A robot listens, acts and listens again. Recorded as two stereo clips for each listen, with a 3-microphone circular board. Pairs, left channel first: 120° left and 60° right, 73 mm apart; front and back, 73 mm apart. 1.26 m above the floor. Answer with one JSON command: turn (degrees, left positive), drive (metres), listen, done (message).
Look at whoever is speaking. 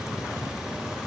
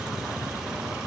{"listen": true}
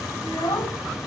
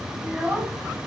{"turn": 105}
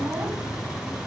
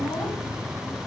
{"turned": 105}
{"listen": true}
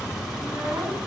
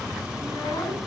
{"listen": true}
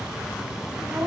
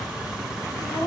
{"turn": -10}
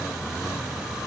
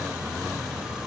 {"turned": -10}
{"listen": true}
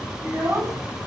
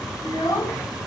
{"done": "Facing the child speaking, over 4 m away."}